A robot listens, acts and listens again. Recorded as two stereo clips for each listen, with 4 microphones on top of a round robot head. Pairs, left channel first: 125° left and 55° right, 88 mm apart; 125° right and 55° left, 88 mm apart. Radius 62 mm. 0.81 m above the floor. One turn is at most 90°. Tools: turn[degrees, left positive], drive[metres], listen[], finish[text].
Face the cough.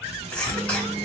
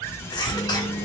Thought: The cough: 160° right.
Action: turn[-90]
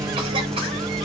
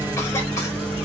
Thought: Nothing new. It was at 70° right.
Action: turn[-70]
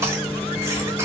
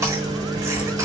Action: listen[]
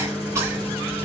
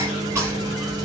Action: finish[Facing where the cough came from. I can't hear it now.]